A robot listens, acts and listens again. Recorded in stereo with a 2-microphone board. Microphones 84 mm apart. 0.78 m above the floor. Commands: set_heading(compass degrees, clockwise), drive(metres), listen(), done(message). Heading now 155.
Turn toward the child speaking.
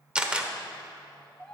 set_heading(125)
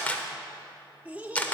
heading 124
set_heading(144)
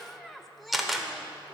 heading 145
done("Facing the child speaking, 1 to 2 m away.")